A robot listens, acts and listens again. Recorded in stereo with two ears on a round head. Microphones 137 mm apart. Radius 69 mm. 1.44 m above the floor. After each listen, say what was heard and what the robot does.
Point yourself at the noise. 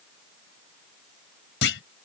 Turn 90° left.
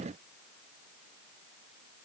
Facing where the clunk came from. I can't hear it now.